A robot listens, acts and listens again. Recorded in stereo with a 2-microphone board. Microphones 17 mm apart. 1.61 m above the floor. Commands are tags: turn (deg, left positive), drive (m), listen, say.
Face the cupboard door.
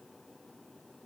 <listen/>
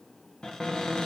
<turn deg="40"/>
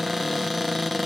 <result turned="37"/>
<say>Facing the cupboard door.</say>